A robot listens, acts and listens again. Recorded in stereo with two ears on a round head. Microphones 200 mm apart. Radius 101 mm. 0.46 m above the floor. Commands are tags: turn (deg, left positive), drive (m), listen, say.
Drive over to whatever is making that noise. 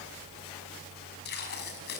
<turn deg="50"/>
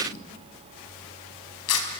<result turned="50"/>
<turn deg="80"/>
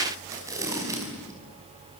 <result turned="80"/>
<turn deg="-15"/>
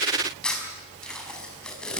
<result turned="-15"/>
<drive m="1.0"/>
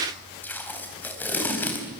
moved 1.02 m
<turn deg="10"/>
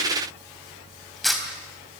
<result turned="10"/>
<drive m="1.0"/>
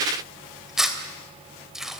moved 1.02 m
<drive m="1.0"/>
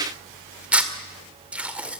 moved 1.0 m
<turn deg="-10"/>
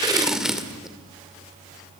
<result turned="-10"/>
<drive m="1.0"/>
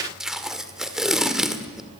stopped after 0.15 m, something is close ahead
<say>Arrived at the tape being pulled, straight ahead.</say>